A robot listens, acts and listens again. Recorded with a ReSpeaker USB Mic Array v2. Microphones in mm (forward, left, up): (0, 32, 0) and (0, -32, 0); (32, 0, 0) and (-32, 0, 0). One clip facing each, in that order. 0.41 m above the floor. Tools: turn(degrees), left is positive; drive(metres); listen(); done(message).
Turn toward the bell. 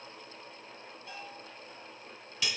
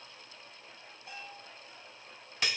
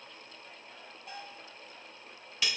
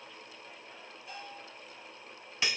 turn(degrees=-20)
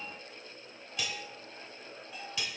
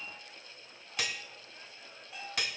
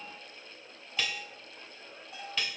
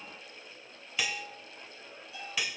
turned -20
done("Facing the bell.")